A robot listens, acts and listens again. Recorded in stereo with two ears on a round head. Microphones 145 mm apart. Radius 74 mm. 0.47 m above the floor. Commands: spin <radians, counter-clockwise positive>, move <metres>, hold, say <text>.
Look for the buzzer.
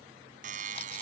spin -0.96
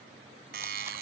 spin -1.13
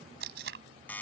spin 0.17
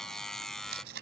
say Facing the buzzer.